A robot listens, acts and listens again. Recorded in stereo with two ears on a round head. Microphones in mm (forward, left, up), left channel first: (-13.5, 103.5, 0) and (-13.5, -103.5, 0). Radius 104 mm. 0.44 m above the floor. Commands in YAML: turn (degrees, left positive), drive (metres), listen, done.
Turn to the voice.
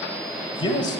turn: 20
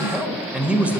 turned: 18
turn: -10
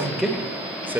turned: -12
turn: -10
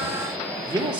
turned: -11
turn: -20
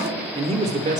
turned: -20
turn: -35
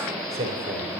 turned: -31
turn: -30
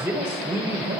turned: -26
turn: -10
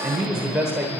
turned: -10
done: "Found it: a man speaking, straight ahead, 1 to 2 m away."